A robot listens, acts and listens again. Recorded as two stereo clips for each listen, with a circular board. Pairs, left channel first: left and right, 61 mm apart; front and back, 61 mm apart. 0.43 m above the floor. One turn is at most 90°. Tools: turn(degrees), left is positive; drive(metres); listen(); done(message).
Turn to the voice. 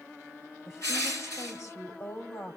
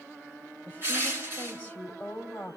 turn(degrees=60)
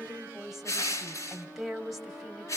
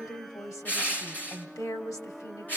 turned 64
done("Found it: a woman speaking, straight ahead, 2 to 4 m away.")